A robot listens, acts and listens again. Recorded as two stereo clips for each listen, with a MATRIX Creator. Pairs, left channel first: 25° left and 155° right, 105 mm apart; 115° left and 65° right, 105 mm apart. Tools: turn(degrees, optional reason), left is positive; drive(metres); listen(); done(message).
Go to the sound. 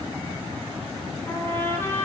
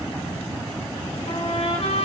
turn(degrees=95, reason="The trumpet: 95° left.")
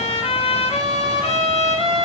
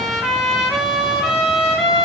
turn(degrees=25, reason="The trumpet is now 25° left.")
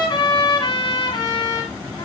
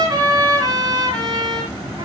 turn(degrees=-15, reason="The trumpet is now 15° right.")
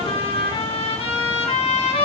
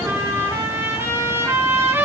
drive(metres=1.0)
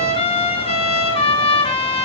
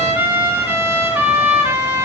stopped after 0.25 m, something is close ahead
done("Something is in my way. I am facing the trumpet but have not reached it.")